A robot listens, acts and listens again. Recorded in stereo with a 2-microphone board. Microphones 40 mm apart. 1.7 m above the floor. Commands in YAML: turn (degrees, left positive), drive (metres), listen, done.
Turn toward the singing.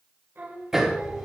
turn: -65
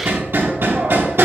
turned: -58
listen: true
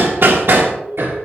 listen: true
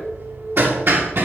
turn: -65
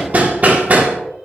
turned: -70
listen: true
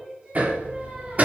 turn: -25
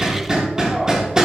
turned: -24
listen: true
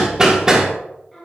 done: "Found it: singing, straight ahead."